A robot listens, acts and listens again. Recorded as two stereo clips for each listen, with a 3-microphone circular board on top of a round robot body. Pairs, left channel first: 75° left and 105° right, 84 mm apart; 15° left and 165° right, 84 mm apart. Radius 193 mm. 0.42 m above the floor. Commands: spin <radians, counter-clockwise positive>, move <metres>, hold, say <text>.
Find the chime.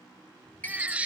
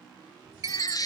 spin 2.53
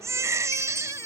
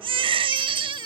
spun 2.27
spin 0.26
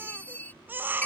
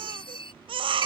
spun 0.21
say Facing the chime.